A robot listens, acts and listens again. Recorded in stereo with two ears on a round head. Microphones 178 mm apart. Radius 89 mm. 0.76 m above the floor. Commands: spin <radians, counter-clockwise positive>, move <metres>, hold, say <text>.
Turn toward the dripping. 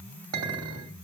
hold
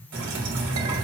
spin -0.96
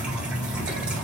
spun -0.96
say Facing the dripping.